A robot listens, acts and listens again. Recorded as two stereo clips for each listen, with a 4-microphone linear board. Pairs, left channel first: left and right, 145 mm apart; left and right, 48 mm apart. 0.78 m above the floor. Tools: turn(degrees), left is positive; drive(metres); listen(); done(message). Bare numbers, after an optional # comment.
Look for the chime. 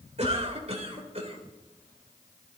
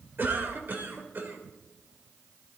listen()
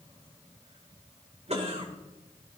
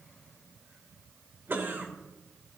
listen()
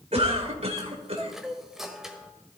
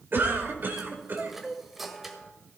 turn(-30)
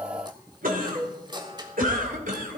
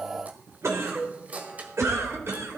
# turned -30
# So it is at 150° right.
turn(-150)
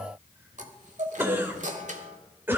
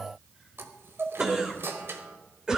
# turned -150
# The chime is now 60° right.
turn(-60)
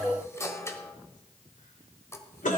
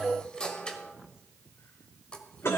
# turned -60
# The chime is now 20° left.
turn(20)
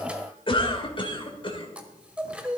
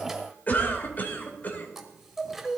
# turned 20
# The chime is now 10° right.
turn(-10)
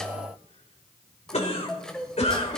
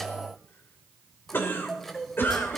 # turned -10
done("Found it: a chime, straight ahead, 1 to 2 m away.")